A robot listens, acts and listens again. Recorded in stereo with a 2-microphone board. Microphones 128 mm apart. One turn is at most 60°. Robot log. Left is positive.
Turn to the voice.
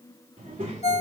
cmd yaw -60
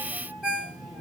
note: So it is at 30° right.
cmd yaw -30
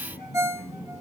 end: Found it: a child speaking, straight ahead, 2 to 4 m away.